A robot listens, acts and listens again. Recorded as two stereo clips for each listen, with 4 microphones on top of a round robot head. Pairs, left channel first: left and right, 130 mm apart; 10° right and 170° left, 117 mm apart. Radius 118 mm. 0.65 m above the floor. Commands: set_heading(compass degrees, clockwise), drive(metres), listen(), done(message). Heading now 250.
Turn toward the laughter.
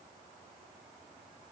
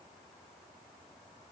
listen()
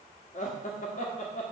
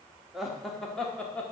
set_heading(180)
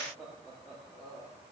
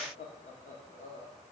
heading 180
set_heading(190)
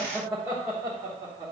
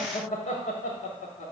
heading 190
set_heading(215)
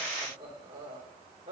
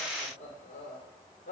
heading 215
set_heading(245)
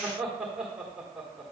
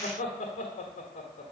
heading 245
done("Found it: laughter, straight ahead, 1 to 2 m away.")